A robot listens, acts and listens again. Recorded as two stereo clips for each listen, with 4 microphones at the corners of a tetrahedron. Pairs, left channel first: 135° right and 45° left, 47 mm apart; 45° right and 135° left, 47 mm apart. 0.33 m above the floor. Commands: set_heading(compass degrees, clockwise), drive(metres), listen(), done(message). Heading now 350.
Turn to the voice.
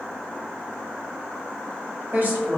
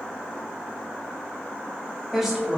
set_heading(285)
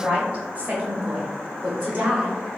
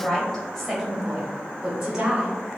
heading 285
set_heading(205)
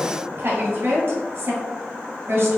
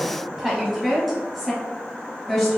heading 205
set_heading(165)
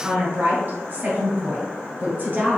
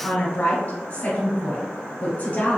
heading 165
done("Facing the woman speaking, 1 to 2 m away.")